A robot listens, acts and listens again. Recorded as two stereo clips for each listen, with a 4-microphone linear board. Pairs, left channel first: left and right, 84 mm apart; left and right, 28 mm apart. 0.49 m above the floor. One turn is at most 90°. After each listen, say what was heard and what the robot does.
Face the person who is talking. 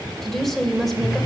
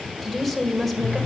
Turn 30° left.
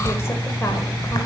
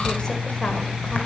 Keep listening.
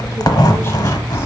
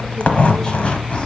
Keep listening.
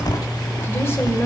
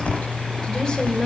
I heard a woman speaking, but can't make it out now. It was about 30° right or 150° left.